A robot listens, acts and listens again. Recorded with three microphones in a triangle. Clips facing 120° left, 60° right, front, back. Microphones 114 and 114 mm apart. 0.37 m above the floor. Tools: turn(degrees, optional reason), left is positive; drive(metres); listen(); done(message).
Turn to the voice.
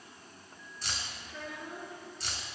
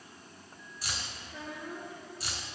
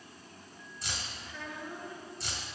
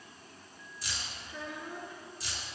turn(degrees=-105, reason="The child speaking: 105° right.")
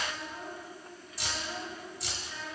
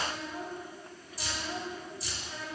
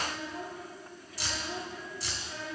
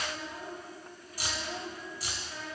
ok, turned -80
turn(degrees=-10, reason="The child speaking is now 10° right.")
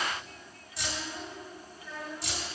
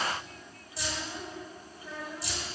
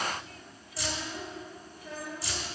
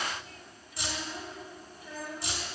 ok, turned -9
done("Found it: a child speaking, straight ahead.")